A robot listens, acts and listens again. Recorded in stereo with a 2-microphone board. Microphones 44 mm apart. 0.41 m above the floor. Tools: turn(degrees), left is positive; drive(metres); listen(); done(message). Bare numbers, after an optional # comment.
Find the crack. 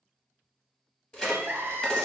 # The crack: about 20° left or 160° left.
turn(20)
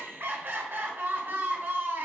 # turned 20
listen()
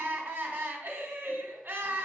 done("I heard a crack, but can't make it out now. It was about straight ahead or 140° left.")